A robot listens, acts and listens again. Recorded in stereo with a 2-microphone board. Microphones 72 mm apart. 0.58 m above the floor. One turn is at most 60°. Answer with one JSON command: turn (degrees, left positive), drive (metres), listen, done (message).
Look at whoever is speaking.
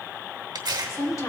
{"turn": 45}
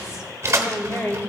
{"turn": 35}
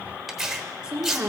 {"turn": -20}
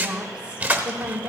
{"turn": -25}
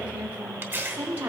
{"turn": -25}
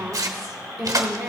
{"done": "Facing the woman speaking."}